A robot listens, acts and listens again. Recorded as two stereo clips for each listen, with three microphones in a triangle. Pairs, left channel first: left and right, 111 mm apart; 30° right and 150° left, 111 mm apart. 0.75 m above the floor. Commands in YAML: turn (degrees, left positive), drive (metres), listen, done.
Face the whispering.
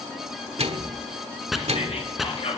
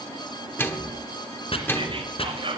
turn: 115
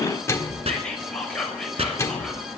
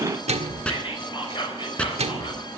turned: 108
turn: 10
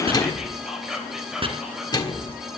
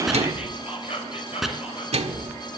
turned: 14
done: "Facing the whispering, over 4 m away."